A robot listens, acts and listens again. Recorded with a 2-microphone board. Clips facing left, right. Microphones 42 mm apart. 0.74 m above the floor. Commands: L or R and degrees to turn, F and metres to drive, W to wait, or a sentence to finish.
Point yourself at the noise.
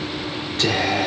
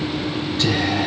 L70
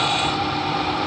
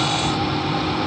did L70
L20
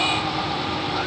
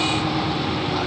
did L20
W
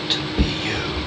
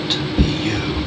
Facing the whispering, 1 to 2 m away.